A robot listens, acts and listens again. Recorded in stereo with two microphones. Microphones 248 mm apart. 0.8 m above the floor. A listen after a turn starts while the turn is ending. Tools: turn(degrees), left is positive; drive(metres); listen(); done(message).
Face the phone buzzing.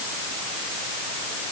listen()
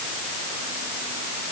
listen()
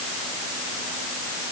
done("I can't make out a phone buzzing to turn to.")